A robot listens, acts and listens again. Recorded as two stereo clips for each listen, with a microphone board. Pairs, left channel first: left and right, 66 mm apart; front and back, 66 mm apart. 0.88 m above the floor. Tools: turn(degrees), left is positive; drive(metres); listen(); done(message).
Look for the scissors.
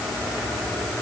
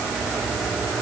listen()
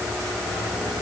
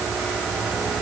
listen()
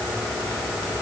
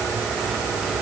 done("I can't make out scissors to turn to.")